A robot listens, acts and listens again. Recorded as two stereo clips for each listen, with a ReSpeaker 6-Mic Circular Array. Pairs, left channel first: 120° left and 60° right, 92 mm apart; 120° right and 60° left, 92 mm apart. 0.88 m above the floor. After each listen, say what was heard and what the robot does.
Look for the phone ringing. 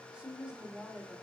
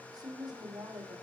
Keep listening.
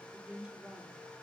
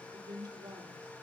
Keep listening.
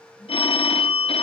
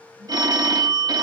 The phone ringing: 105° left. Turn 105° left.
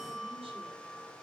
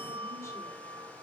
Keep listening.
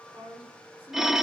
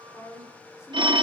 The phone ringing is now 25° left. Turn 25° left.
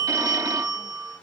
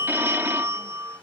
The phone ringing is now 10° right. Turn 10° right.
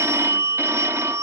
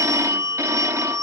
Found it: a phone ringing, straight ahead, under 1 m away.